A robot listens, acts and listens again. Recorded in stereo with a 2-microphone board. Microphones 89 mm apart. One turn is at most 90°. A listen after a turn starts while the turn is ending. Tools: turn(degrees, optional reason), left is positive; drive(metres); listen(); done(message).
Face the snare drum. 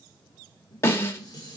turn(degrees=30, reason="The snare drum: about 30° left or 150° left.")
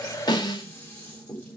turn(degrees=90, reason="So it is at 120° left.")
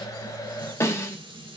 turn(degrees=30, reason="The snare drum is now 30° left.")
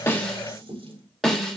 done("Found it: a snare drum, straight ahead.")